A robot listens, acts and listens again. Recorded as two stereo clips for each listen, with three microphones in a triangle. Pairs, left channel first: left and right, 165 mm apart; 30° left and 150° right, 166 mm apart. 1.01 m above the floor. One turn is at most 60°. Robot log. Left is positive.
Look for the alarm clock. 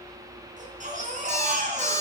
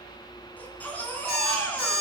note: The alarm clock: 15° left.
cmd yaw +15
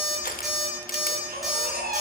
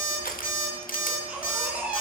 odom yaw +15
end: Facing the alarm clock, over 4 m away.